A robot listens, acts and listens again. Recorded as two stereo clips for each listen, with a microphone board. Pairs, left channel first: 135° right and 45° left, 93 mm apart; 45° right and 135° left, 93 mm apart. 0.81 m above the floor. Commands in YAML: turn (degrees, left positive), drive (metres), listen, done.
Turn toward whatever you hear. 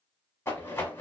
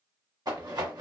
turn: 170
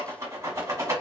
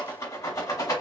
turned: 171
done: "Facing the rattle."